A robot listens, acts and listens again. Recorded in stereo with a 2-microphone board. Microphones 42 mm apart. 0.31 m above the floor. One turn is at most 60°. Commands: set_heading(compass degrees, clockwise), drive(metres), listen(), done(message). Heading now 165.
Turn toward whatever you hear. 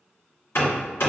set_heading(105)
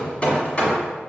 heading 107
set_heading(77)
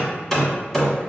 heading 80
done("Facing the hammering.")